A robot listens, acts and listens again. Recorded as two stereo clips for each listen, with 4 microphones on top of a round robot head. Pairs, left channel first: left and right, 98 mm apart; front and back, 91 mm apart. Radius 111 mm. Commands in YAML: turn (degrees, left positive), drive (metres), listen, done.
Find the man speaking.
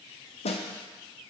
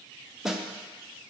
listen: true
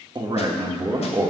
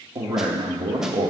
turn: -145
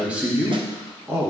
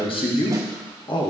turn: -25
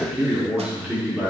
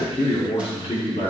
turn: -20
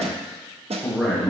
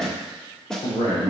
turn: -15
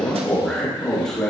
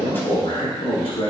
done: "Found it: a man speaking, straight ahead."